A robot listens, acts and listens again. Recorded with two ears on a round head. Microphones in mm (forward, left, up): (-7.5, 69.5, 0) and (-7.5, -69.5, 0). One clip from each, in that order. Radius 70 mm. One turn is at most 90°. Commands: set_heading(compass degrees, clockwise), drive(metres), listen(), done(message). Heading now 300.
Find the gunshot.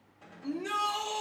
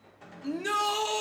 set_heading(350)
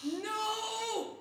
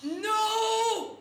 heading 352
listen()
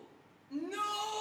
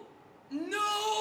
done("I heard a gunshot, but can't make it out now. It was about 5° left or 80° right.")